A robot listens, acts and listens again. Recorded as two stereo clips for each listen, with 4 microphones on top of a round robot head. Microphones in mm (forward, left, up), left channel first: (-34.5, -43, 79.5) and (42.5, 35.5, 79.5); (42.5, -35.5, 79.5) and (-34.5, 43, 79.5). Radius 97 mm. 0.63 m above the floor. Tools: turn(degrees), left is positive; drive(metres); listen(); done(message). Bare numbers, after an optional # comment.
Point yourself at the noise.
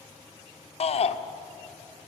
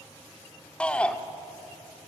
# The shout: 125° right.
turn(-125)
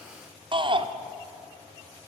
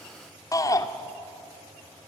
# The shout is now 10° left.
turn(10)
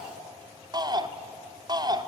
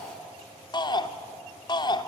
done("Found it: a shout, straight ahead, 1 to 2 m away.")